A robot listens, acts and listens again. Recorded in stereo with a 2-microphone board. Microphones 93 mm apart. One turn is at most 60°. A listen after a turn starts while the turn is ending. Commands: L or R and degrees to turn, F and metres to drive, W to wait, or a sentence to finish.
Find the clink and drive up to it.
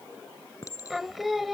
L35
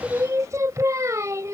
W
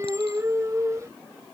W
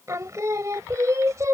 I heard a clink, but can't make it out now. It was about straight ahead or 110° left. I did not reach it.